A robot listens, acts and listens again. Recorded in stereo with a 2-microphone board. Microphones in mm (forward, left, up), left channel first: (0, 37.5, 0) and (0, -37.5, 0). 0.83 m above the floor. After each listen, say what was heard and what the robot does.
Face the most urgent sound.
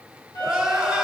Turn 30° right.
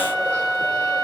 Keep listening.
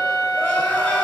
Keep listening.
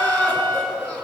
So it is at 20° left. Turn 20° left.
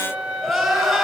Facing the crying.